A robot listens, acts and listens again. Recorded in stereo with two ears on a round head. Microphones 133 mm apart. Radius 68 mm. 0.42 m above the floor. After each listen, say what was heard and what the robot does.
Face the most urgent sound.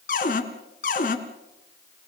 Keep listening.
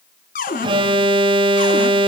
The alarm: about 30° right or 150° right. Turn 30° right.
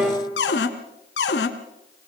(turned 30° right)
Facing the alarm.